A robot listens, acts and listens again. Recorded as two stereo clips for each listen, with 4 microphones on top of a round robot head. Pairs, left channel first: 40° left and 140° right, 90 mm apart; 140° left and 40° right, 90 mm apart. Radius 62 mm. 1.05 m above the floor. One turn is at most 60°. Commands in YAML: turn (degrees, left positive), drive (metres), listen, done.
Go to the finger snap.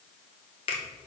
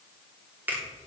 turn: 30
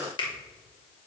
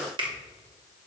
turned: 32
drive: 1.0
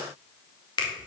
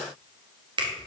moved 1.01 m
drive: 1.0
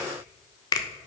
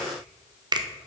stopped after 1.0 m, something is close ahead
done: "I am next to the finger snap."